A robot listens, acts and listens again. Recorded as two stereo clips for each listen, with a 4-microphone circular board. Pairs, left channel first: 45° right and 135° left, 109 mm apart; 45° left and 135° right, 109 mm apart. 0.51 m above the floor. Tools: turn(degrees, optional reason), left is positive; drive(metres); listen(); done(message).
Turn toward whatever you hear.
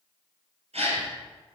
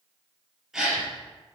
turn(degrees=140, reason="The gasp: 140° left.")
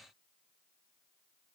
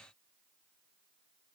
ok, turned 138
done("I heard a gasp from this way, but can't make it out now.")